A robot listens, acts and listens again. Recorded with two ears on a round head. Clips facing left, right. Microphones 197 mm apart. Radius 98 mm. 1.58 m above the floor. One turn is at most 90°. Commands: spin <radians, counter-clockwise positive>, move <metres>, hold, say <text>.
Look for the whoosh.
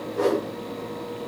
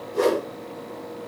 spin -0.70
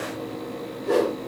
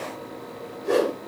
say Found it: a whoosh, straight ahead, 2 to 4 m away.